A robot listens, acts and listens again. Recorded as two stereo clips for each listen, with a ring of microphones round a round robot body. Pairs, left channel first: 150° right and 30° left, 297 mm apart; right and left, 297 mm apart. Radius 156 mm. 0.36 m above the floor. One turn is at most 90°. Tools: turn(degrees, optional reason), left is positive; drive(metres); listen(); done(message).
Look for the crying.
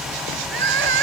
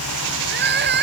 turn(degrees=35, reason="The crying: 35° left.")
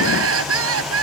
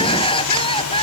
turn(degrees=-15, reason="The crying is now 15° right.")
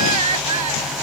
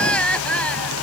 done("Found it: crying, straight ahead.")